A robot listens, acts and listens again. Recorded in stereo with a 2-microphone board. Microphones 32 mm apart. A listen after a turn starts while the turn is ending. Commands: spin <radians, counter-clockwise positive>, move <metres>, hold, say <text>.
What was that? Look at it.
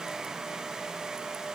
hold
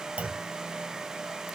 spin -0.87
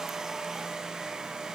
hold
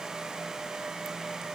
say I heard a clunk, but can't make it out now. It was about straight ahead or 80° right.